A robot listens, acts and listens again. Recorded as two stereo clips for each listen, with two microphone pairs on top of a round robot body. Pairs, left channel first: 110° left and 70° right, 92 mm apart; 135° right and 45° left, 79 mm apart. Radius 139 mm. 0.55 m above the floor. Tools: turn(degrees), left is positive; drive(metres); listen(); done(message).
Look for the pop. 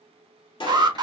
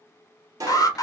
turn(degrees=90)
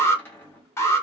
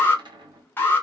done("I heard a pop from this way, but can't make it out now.")